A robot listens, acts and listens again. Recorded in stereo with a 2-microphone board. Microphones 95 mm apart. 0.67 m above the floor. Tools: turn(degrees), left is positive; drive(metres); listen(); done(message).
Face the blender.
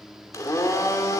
turn(degrees=35)
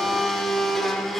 done("Found it: a blender, straight ahead.")